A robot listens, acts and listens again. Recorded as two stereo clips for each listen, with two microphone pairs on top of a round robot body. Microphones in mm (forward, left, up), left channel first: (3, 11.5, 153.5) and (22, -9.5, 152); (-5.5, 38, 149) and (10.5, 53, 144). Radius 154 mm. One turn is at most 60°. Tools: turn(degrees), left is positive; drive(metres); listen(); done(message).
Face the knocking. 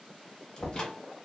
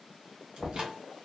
turn(degrees=60)
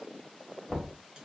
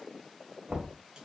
turn(degrees=50)
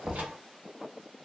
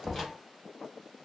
done("Found it: knocking, straight ahead.")